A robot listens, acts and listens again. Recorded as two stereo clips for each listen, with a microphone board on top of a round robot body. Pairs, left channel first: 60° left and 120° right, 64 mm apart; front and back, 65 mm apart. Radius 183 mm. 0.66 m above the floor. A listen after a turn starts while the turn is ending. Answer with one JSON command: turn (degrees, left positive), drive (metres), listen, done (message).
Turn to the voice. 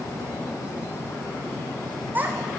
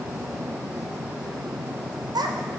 {"turn": 175}
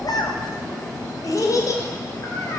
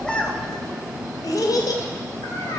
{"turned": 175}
{"turn": 20}
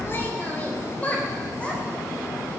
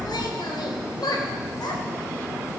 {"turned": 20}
{"turn": -10}
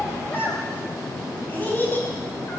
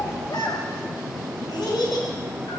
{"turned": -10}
{"done": "Facing the child speaking, 2 to 4 m away."}